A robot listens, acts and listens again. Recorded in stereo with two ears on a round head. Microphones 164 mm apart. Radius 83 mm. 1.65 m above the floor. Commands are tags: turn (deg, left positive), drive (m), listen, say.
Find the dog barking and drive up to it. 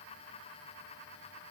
<listen/>
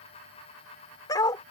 <turn deg="20"/>
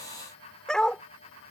<drive m="1.0"/>
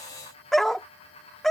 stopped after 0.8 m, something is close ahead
<say>I am next to the dog barking.</say>